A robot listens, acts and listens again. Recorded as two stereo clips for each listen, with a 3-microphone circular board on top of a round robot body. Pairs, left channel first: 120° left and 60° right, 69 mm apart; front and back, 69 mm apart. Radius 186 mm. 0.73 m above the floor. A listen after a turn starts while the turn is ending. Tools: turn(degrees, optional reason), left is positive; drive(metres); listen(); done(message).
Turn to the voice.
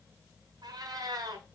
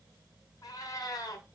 listen()
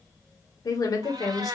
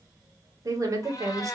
turn(degrees=145, reason="The woman speaking: 145° left.")
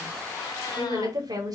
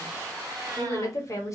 turn(degrees=-40, reason="The woman speaking is now 40° right.")
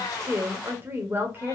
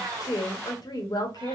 done("Found it: a woman speaking, straight ahead, 1 to 2 m away.")